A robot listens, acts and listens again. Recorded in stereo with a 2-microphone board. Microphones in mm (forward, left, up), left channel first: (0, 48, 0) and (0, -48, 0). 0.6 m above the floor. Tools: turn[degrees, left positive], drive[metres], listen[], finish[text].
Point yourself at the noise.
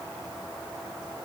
Action: listen[]
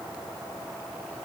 Action: listen[]
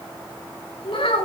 Thought: The child speaking: about 65° left or 115° left.
Action: turn[65]
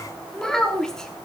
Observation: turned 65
Action: finish[Facing the child speaking, 2 to 4 m away.]